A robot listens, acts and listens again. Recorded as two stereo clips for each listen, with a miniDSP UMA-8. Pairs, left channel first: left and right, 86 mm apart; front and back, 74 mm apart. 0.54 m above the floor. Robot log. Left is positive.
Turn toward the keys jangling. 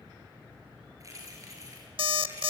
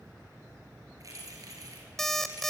note: The keys jangling: 140° right.
cmd yaw -140
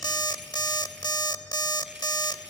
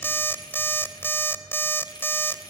cmd idle
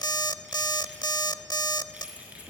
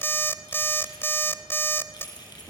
note: The keys jangling is now 15° right.
cmd yaw -15
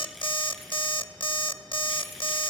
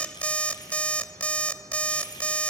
cmd idle
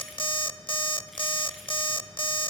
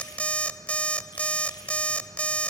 cmd idle
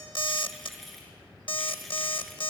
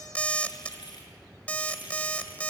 end: Found it: keys jangling, straight ahead.